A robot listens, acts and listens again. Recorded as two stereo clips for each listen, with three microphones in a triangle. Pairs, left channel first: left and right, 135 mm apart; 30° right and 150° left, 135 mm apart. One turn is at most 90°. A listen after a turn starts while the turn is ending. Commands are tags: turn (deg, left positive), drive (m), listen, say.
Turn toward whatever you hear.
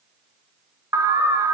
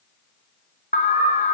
<turn deg="-25"/>
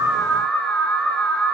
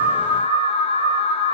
<turn deg="10"/>
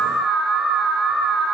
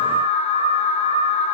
<say>Found it: an alarm, straight ahead, 2 to 4 m away.</say>